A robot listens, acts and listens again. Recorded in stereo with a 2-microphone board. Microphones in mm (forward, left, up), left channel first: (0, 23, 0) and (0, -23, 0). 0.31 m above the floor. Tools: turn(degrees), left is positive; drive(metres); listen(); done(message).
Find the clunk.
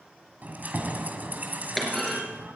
turn(degrees=30)
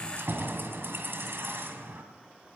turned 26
listen()
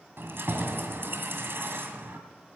done("I heard a clunk, but can't make it out now. It was about 25° right or 155° left.")